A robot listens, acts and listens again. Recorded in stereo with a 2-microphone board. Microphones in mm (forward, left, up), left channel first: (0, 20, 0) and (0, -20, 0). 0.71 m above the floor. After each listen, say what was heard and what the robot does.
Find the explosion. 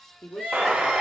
The explosion: about 35° right or 145° right. Turn 35° right.
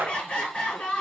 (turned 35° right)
So it is at 110° right. Turn 110° right.
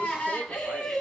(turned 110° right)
Facing where the explosion came from. I can't hear it now.